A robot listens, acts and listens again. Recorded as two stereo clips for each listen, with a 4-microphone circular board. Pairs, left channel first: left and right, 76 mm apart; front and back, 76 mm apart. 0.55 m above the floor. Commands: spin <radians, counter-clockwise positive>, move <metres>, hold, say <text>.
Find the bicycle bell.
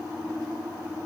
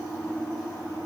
hold
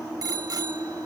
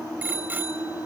spin -2.01
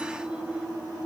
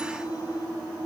hold
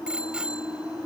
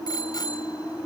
spin -0.26
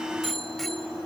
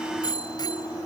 say Found it: a bicycle bell, straight ahead.